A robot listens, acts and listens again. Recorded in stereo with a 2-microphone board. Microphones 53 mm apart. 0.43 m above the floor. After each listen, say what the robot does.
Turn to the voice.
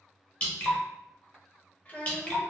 Turn 30° left.
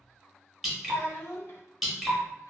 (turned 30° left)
Turn 120° left.
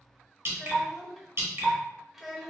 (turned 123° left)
Facing the child speaking, under 1 m away.